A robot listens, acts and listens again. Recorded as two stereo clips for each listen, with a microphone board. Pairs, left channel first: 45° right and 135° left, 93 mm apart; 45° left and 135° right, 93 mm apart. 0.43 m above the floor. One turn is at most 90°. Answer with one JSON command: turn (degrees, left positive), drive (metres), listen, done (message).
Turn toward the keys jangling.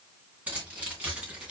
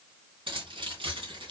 {"turn": -90}
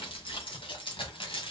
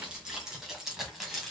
{"turn": -45}
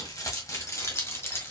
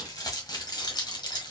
{"turn": 15}
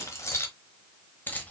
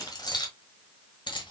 {"turn": 25}
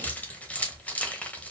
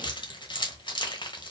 {"turn": 25}
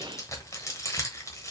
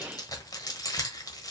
{"done": "Found it: keys jangling, straight ahead."}